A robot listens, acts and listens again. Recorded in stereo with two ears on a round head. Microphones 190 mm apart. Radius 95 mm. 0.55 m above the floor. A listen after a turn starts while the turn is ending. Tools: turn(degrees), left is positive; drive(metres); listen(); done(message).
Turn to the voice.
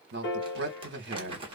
turn(degrees=-55)
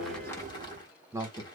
turn(degrees=-15)
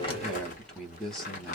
done("Facing the man speaking, 1 to 2 m away.")